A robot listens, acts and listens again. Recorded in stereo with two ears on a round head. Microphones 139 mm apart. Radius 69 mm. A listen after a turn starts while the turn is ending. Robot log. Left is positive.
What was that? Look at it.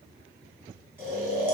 cmd yaw -30
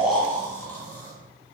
note: So it is at 15° left.
cmd yaw +15
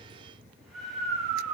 end: Found it: snoring, straight ahead.